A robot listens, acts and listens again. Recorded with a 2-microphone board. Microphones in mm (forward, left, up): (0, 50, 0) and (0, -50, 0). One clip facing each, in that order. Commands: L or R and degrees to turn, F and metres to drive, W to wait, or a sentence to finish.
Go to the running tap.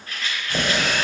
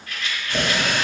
L30
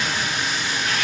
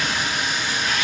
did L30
R15
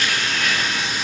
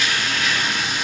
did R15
F1.0
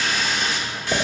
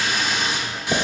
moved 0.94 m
R15
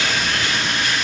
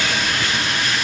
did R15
F1.0
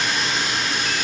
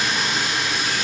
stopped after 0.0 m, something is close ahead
I am next to the running tap.